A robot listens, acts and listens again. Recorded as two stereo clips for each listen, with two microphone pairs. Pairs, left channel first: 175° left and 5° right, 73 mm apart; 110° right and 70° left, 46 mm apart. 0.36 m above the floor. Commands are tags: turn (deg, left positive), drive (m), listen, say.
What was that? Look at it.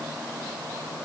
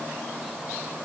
<listen/>
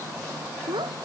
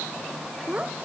<say>Facing the child speaking.</say>